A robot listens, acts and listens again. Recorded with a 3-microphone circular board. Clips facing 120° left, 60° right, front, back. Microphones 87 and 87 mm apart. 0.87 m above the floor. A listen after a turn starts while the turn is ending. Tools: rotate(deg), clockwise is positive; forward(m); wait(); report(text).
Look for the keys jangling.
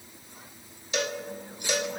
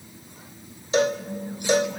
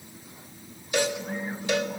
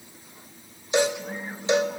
wait()
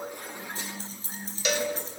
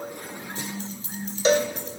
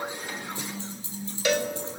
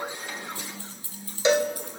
rotate(-65)
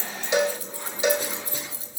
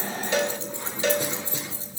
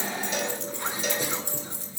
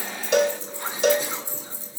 report("Facing the keys jangling, 2 to 4 m away.")